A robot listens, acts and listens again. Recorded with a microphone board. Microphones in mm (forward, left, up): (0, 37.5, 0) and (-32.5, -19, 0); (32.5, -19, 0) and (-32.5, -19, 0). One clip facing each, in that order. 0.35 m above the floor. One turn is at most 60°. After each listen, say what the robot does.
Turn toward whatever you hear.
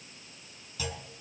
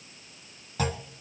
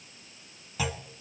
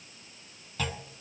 Turn 60° right.
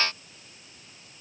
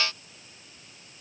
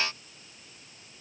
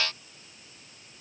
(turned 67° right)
Turn 15° right.
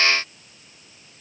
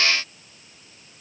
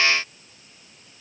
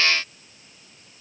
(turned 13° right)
Facing where the clunk came from. I can't hear it now.